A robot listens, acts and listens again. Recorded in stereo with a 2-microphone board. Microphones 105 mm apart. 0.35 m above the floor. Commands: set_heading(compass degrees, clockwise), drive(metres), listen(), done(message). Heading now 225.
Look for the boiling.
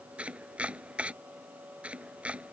listen()
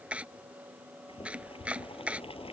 set_heading(160)
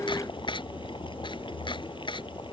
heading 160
set_heading(105)
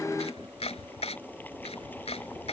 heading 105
set_heading(90)
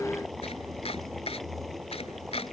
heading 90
done("Facing the boiling.")